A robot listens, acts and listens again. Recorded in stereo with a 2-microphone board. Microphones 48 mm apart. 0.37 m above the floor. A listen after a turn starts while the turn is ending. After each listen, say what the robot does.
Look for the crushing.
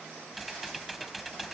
Keep listening.
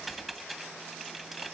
Keep listening.
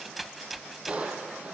Turn 25° right.
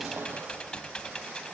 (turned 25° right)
Keep listening.
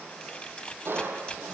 Turn 130° right.
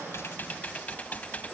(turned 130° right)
Keep listening.
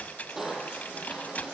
Turn 10° right.
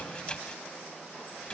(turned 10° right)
Keep listening.
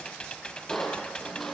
Facing the crushing, over 4 m away.